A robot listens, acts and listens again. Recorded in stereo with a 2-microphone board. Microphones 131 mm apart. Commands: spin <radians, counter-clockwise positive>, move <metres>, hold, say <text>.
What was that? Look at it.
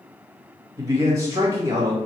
spin -0.44
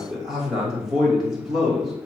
say Facing the man speaking.